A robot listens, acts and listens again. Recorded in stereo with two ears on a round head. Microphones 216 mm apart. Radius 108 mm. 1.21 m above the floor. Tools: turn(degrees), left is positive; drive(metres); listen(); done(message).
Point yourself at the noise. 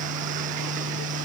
listen()
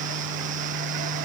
listen()
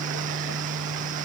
done("I can't make out anything.")